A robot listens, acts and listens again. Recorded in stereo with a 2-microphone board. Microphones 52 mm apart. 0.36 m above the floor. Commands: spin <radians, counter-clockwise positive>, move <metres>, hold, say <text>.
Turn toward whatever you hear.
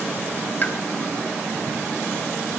spin 0.61
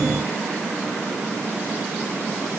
hold
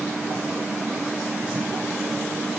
say I heard a pop, but can't make it out now. It was about straight ahead or 110° left.